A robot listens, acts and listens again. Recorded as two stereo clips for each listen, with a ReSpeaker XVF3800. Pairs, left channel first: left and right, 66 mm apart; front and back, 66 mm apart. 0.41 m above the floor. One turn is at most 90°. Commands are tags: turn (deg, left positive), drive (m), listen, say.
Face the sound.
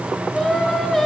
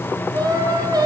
<turn deg="90"/>
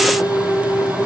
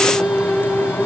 <turn deg="90"/>
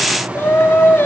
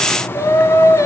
<turn deg="35"/>
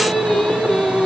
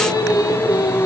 <turn deg="10"/>
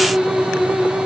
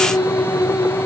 <say>Found it: singing, straight ahead.</say>